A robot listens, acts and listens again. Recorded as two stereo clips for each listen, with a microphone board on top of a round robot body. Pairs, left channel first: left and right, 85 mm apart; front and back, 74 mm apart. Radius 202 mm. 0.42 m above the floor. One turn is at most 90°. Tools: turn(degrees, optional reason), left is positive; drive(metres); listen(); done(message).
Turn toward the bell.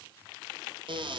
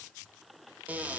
listen()
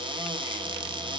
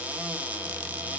listen()
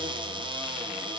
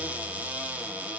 done("I can't make out a bell, only a cupboard door.")